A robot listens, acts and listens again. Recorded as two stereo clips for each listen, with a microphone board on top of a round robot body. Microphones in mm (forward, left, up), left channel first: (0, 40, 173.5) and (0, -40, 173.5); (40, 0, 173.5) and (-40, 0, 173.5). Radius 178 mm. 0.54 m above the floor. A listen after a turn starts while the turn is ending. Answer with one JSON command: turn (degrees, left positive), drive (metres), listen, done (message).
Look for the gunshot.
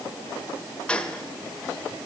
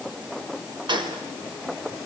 {"turn": 170}
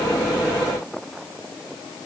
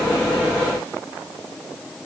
{"done": "I heard a gunshot from this way, but can't make it out now."}